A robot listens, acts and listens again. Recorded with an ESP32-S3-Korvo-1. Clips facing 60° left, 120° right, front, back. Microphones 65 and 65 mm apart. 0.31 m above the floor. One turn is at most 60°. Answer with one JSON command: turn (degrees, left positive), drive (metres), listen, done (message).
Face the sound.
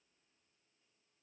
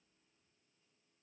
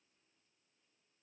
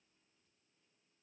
{"listen": true}
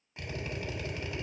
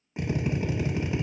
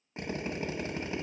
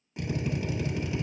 {"turn": -55}
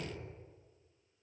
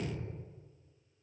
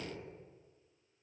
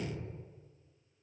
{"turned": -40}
{"turn": -15}
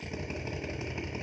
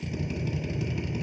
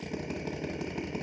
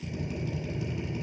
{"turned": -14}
{"done": "Facing the drill."}